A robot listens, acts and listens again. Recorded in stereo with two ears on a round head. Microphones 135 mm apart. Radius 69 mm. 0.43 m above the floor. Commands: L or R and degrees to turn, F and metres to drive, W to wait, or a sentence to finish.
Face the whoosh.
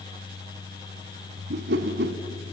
R70
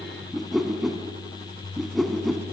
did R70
Facing the whoosh.